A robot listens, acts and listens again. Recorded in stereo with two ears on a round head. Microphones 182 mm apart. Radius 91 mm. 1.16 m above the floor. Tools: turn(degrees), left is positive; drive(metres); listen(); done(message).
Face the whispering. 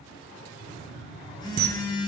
listen()
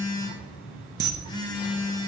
listen()
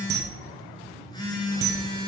done("I can't make out whispering to turn to.")